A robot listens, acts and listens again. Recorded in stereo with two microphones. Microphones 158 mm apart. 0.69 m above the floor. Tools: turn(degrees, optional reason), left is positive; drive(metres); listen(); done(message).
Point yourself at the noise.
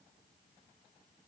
listen()
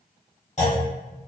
turn(degrees=45, reason="The clunk: about 45° left or 135° left.")
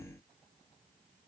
listen()
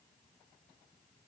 done("I heard a clunk, but can't make it out now. It was about straight ahead or 90° left.")